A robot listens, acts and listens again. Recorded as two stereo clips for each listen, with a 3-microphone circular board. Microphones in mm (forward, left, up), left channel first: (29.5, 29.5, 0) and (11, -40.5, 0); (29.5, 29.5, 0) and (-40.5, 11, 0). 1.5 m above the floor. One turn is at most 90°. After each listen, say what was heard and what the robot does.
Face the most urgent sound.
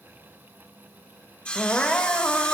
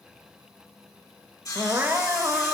The crying: 145° left. Turn 90° left.
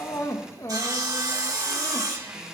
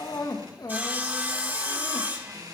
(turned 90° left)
The crying is now 40° left. Turn 40° left.
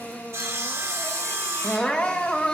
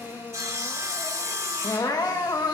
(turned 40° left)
Facing the crying, 1 to 2 m away.